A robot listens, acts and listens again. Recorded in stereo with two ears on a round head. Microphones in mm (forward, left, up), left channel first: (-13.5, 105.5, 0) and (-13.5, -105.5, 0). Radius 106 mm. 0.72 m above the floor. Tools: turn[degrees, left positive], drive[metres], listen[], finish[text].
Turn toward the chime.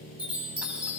Action: turn[-30]
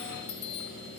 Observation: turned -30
Thought: So it is at 25° left.
Action: turn[25]
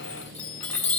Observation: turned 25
Action: finish[Found it: a chime, straight ahead.]